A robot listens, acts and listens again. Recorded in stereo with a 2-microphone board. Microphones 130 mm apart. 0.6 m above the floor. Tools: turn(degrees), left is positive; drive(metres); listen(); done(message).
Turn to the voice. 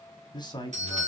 turn(degrees=30)
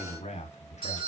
turn(degrees=110)
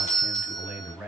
turn(degrees=-10)
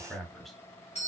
done("Facing the man speaking.")